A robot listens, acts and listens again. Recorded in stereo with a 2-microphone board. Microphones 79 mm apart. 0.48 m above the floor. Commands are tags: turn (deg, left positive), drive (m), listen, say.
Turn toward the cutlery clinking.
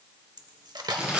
<turn deg="-60"/>
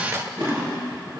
<turn deg="-40"/>
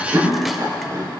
<listen/>
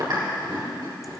<listen/>
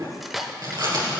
<say>Facing the cutlery clinking.</say>